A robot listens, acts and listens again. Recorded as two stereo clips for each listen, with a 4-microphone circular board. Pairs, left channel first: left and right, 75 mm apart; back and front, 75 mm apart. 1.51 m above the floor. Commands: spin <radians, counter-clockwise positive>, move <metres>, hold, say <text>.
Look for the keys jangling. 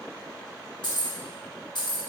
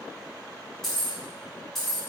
spin 1.66
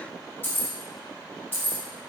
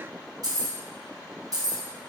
spin 0.52
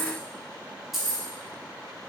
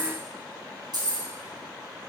say Facing the keys jangling, under 1 m away.